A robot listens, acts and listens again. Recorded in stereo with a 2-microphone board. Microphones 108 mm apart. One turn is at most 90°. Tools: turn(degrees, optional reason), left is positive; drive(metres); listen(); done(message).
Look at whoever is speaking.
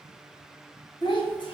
turn(degrees=50, reason="The child speaking: about 50° left or 130° left.")
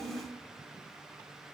turn(degrees=70, reason="So it is at 70° left.")
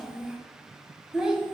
turn(degrees=-10, reason="The child speaking is now 10° right.")
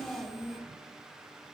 done("Facing the child speaking.")